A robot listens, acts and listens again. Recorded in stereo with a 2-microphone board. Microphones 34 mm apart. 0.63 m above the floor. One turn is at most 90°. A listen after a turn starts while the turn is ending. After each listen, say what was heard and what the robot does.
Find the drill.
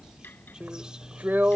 The drill: about 65° right or 115° right. Turn 65° right.
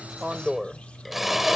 Facing the drill.